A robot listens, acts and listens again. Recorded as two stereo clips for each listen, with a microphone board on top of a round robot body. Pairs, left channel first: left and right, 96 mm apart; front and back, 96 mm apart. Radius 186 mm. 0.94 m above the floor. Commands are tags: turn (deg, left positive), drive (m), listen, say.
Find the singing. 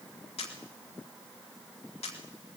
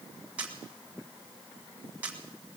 <listen/>
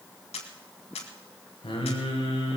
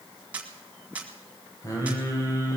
<turn deg="60"/>
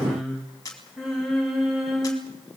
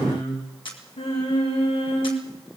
<say>Found it: singing, straight ahead, over 4 m away.</say>